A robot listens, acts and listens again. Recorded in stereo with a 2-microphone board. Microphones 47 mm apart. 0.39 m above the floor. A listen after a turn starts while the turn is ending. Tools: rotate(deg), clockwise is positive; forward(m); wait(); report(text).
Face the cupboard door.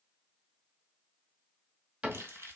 rotate(25)
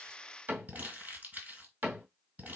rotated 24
rotate(130)
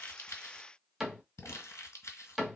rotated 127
report("Found it: a cupboard door, straight ahead.")